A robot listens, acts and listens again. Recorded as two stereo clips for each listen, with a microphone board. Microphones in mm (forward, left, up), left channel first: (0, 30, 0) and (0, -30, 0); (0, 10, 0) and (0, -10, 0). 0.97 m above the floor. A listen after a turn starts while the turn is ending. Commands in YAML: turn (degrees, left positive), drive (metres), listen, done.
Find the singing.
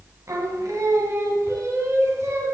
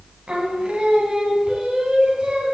turn: -50
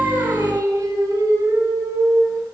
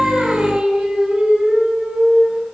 turn: -80
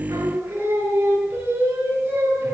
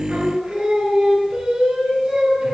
turn: -35
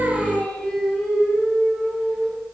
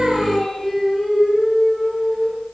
turn: 20
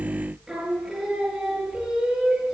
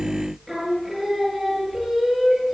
done: "Found it: singing, straight ahead."